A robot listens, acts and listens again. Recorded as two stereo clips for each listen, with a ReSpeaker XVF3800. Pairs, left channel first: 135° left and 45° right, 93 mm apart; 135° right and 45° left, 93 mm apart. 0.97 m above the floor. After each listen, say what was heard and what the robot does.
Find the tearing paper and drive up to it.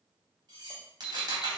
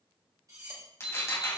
The tearing paper: 80° right. Turn 80° right.
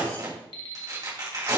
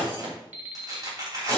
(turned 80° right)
Drive 1.0 m forward.
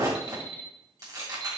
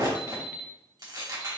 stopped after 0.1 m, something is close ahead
Something is in my way. I am facing the tearing paper but have not reached it.